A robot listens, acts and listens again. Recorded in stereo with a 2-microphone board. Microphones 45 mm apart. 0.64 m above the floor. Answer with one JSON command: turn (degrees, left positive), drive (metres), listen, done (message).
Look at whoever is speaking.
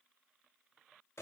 {"listen": true}
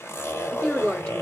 {"turn": 20}
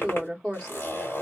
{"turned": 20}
{"done": "Facing the woman speaking, 1 to 2 m away."}